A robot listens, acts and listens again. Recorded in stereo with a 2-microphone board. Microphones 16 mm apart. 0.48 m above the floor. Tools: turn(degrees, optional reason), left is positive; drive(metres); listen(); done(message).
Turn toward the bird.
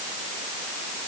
listen()
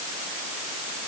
listen()
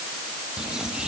turn(degrees=-55, reason="The bird: about 55° right or 125° right.")
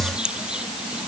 turn(degrees=-75, reason="So it is at 75° right.")
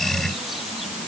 listen()
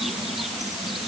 done("Found it: a bird, straight ahead.")